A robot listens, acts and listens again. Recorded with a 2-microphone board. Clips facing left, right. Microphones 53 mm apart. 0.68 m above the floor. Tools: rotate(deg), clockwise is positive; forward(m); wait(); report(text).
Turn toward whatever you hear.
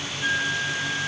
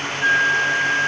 rotate(40)
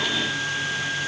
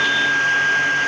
rotate(90)
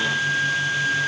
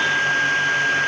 rotate(15)
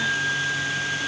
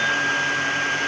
report("Found it: a flute, straight ahead, 1 to 2 m away.")